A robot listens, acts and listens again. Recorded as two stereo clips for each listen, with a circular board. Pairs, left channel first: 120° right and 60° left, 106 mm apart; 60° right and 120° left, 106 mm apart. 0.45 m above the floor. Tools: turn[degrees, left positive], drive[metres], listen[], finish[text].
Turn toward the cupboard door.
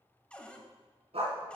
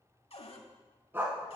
Thought: The cupboard door: 40° right.
Action: turn[-40]
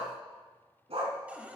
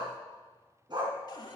Thought: The cupboard door is now 15° right.
Action: turn[-15]
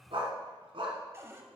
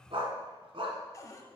Action: finish[Facing the cupboard door.]